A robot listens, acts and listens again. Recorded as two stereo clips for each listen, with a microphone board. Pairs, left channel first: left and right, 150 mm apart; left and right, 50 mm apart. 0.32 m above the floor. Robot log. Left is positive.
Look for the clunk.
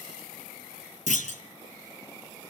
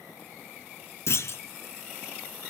note: The clunk: about 55° left or 125° left.
cmd yaw +55
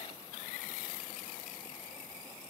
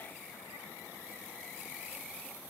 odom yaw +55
cmd idle
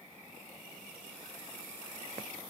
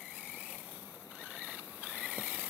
end: I heard a clunk, but can't make it out now. It was about straight ahead or 70° left.